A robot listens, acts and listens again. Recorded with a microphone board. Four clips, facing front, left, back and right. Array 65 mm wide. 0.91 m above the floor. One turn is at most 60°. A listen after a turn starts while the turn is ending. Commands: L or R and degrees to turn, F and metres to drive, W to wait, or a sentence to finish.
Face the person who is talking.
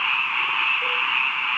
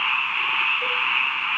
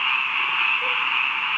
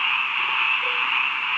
W
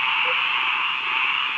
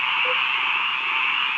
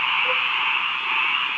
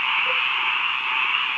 W
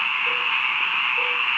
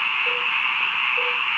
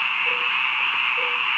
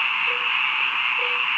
I can't make out anyone speaking.